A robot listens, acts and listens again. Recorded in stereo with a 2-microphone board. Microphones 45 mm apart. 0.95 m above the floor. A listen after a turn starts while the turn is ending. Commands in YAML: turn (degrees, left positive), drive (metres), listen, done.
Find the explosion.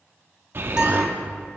turn: -50
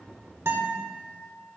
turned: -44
listen: true
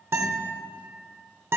done: "I heard an explosion, but can't make it out now. It was about 5° right or 90° right."